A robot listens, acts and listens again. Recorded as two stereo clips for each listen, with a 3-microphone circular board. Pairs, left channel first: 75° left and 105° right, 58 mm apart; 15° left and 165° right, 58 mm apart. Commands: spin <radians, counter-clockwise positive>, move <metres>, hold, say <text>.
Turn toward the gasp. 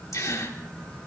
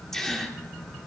spin 1.75
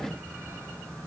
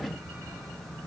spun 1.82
say I heard a gasp from this way, but can't make it out now.